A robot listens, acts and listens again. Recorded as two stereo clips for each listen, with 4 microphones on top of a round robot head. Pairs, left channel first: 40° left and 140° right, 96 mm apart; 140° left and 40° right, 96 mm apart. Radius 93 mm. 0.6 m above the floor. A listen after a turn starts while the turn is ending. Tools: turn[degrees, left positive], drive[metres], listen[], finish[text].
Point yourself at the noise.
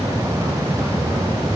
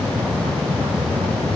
Action: listen[]
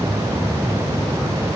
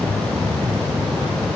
Action: listen[]
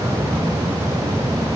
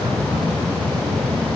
Action: finish[I can't make out anything.]